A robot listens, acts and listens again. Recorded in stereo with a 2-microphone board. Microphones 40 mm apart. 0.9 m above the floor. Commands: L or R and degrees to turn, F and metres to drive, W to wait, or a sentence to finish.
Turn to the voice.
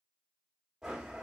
W
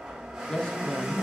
L20
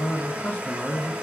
L140
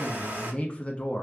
L35
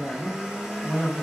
Facing the man speaking, 1 to 2 m away.